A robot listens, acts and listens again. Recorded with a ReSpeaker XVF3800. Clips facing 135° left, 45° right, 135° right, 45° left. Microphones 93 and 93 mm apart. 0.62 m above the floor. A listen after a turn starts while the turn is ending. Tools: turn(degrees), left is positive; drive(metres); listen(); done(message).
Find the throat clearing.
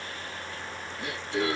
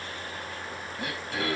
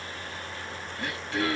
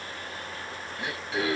turn(degrees=-25)
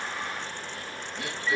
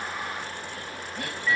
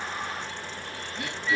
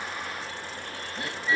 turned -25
turn(degrees=-10)
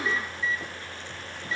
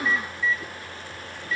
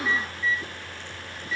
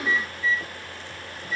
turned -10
listen()
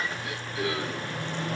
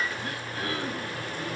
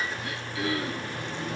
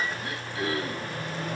done("Found it: throat clearing, straight ahead, over 4 m away.")